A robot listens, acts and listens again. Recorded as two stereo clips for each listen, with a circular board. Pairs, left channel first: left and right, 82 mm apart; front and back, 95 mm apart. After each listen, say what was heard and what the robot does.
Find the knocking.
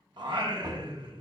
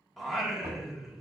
The knocking: 130° right. Turn 130° right.
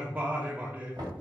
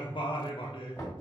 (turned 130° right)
The knocking is now 60° right. Turn 60° right.
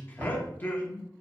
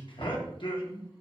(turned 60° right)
The knocking is now 15° right. Turn 15° right.
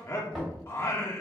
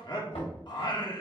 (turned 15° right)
Facing the knocking, 2 to 4 m away.